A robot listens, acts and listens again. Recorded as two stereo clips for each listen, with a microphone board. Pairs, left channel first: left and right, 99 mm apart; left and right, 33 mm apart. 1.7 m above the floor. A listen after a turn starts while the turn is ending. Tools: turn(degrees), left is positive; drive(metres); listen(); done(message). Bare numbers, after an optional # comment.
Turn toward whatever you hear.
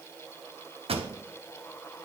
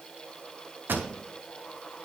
turn(-90)
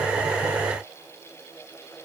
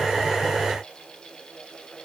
done("Facing where the pop came from. I can't hear it now.")